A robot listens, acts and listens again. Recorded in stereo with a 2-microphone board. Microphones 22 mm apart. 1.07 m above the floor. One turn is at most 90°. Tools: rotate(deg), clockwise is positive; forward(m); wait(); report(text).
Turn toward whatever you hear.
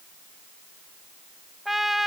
rotate(30)
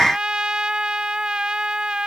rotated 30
rotate(90)
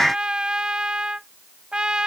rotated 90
rotate(45)
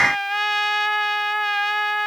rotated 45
report("Found it: a trumpet, straight ahead.")